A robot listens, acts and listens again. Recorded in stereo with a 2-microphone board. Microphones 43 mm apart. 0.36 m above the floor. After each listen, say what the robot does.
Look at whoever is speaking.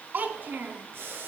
Turn 50° right.
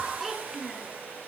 Facing the child speaking, 2 to 4 m away.